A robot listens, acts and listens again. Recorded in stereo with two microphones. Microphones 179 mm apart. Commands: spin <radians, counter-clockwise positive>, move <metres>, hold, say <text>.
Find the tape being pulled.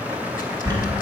hold
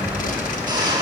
hold
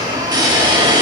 say I can't make out tape being pulled to turn to.